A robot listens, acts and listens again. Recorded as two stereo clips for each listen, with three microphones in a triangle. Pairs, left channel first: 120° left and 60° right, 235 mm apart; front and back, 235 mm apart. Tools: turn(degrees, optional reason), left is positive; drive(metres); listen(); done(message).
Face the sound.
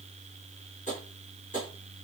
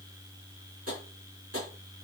turn(degrees=180, reason="The tapping: straight behind.")
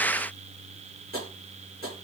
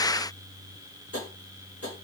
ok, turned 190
turn(degrees=-10, reason="The tapping is now 10° right.")
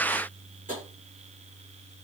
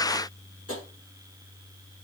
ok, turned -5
done("Facing the tapping.")